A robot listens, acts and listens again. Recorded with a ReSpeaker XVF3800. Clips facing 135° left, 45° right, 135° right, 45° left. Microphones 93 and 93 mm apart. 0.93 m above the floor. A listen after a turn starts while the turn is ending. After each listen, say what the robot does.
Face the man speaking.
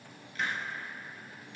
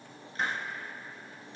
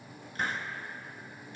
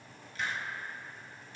Keep listening.
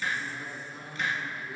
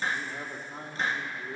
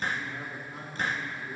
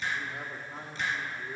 Turn 10° right.
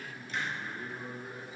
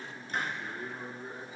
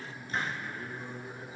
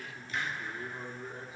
Turn 15° left.
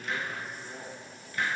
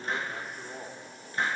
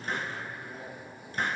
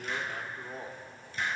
Turn 10° left.
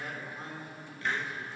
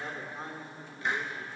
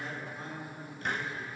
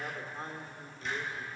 Turn 10° left.
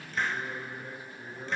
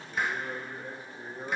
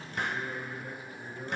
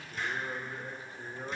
Facing the man speaking, 2 to 4 m away.